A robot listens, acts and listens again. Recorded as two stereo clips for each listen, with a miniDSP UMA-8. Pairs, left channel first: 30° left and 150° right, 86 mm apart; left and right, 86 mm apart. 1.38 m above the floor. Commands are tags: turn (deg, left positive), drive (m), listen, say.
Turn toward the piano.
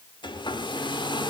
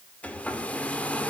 <listen/>
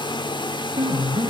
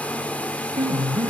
<turn deg="-115"/>
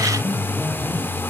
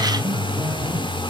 <turn deg="-40"/>
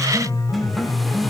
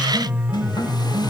<turn deg="-10"/>
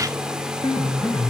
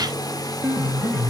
<say>Found it: a piano, straight ahead, 2 to 4 m away.</say>